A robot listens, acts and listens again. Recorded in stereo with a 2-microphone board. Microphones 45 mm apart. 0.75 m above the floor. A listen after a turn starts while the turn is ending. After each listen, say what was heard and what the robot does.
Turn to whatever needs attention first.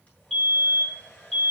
Turn 30° left.
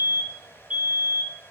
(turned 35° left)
So it is at 30° right. Turn 30° right.
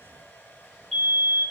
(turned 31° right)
Facing the fire alarm, 2 to 4 m away.